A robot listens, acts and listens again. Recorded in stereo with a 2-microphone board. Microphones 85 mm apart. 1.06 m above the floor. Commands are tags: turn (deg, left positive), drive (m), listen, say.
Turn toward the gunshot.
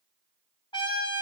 <listen/>
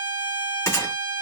<turn deg="35"/>
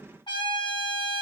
<listen/>
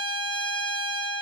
<say>I heard a gunshot, but can't make it out now. It was about straight ahead or 110° left.</say>